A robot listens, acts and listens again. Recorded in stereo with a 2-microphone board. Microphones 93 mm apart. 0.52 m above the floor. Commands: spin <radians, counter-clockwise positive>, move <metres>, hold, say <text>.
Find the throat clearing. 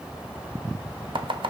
hold
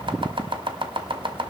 hold
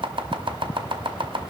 say I can't make out throat clearing, only chopping.